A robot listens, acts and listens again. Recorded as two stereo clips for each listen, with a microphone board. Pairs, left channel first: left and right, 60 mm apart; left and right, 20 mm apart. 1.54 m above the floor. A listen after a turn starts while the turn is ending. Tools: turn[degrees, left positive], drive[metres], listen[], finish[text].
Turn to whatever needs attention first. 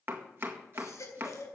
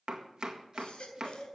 Thought: The baby crying: about 60° left or 120° left.
Action: turn[60]
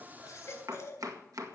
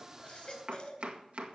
Thought: So it is at 55° left.
Action: turn[55]
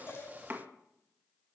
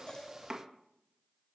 Action: listen[]
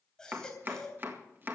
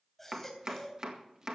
Thought: The baby crying is now 10° left.
Action: turn[10]
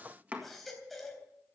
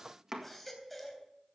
Action: finish[Facing the baby crying.]